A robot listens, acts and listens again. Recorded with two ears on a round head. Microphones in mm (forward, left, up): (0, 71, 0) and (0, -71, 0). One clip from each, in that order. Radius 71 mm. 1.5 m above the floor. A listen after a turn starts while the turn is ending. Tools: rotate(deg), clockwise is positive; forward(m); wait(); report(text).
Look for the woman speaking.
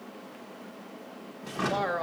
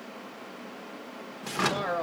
rotate(-20)
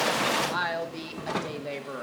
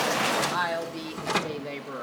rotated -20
report("Found it: a woman speaking, straight ahead.")